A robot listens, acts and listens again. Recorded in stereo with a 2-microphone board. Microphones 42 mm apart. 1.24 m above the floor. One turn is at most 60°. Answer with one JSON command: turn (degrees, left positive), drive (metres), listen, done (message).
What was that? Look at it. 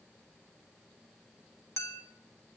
{"turn": 60}
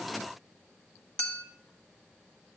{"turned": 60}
{"turn": 20}
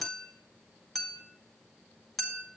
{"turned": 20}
{"done": "Facing the clink."}